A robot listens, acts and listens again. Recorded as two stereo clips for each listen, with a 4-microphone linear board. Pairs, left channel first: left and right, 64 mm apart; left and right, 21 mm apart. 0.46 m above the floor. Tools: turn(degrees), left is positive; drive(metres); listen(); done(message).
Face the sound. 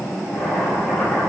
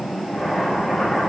turn(degrees=30)
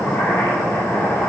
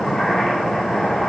turn(degrees=145)
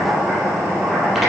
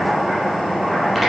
done("Found it: boiling, straight ahead, over 4 m away.")